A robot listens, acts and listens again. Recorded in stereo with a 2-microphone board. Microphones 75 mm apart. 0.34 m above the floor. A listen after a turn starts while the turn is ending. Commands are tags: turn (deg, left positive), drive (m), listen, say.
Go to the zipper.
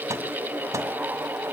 <listen/>
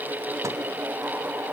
<listen/>
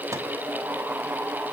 <say>I can't make out a zipper.</say>